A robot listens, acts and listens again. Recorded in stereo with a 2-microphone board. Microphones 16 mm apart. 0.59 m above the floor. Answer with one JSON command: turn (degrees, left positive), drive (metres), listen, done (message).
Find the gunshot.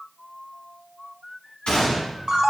{"turn": 90}
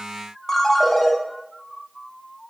{"done": "I heard a gunshot from this way, but can't make it out now."}